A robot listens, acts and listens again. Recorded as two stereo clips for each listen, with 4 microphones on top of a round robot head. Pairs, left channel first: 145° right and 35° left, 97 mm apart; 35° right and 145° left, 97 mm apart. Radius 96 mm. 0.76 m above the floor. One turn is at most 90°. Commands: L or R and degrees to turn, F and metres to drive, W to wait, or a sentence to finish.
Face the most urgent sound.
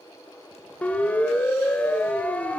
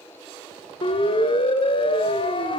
R70
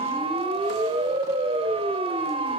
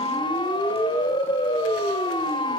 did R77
Facing the siren.